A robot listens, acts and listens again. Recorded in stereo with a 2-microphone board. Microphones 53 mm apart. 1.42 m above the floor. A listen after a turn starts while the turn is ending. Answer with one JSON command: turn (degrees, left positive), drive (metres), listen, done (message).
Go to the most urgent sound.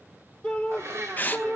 {"turn": 30}
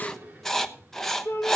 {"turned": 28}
{"turn": 145}
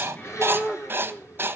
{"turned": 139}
{"drive": 1.0}
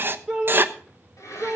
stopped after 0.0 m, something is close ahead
{"done": "Blocked. The shout is further on, straight ahead."}